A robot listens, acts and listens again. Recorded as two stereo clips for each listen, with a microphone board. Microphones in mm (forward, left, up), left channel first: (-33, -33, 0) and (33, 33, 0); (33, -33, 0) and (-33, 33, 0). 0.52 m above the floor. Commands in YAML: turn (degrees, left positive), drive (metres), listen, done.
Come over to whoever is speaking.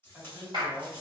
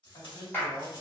turn: -25
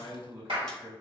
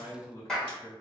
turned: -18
drive: 1.0
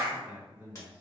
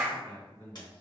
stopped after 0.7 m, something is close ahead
done: "Arrived at the man speaking, straight ahead."